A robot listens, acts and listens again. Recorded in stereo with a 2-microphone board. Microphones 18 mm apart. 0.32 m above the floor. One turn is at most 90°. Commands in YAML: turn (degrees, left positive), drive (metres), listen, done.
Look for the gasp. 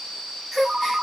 turn: -30
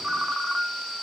listen: true
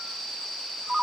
done: "I heard a gasp, but can't make it out now. It was about 20° left or 140° right."